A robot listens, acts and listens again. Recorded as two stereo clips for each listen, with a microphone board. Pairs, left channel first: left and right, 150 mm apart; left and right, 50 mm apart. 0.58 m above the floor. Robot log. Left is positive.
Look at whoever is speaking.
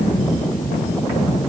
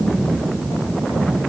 cmd idle
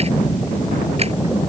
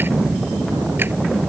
cmd idle
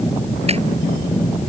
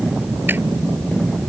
end: I can't make out anyone speaking to turn to.